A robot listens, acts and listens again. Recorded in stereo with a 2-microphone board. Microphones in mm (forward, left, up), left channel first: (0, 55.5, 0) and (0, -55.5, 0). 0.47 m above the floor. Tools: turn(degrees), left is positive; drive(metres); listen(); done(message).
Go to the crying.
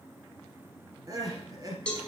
turn(degrees=-35)
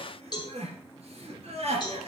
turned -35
turn(degrees=-110)
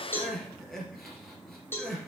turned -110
drive(metres=1.0)
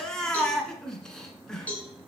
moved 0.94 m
drive(metres=1.0)
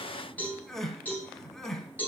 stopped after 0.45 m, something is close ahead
done("I am next to the crying.")